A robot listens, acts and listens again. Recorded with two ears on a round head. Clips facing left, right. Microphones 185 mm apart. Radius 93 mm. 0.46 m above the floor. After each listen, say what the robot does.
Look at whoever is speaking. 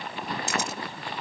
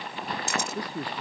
Turn 35° right.
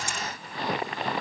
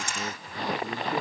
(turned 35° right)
Keep listening.
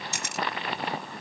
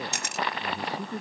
Turn 120° right.
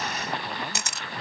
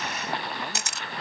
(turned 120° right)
Keep listening.
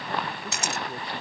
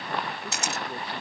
Keep listening.
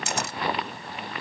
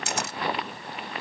Facing where the man speaking came from. I can't hear it now.